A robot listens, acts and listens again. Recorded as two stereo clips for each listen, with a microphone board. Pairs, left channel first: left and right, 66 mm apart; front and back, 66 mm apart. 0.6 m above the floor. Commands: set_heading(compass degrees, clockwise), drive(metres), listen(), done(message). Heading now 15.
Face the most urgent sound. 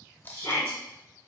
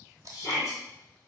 set_heading(335)
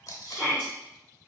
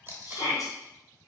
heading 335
set_heading(320)
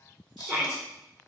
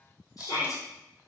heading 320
done("Found it: a shout, straight ahead, 1 to 2 m away.")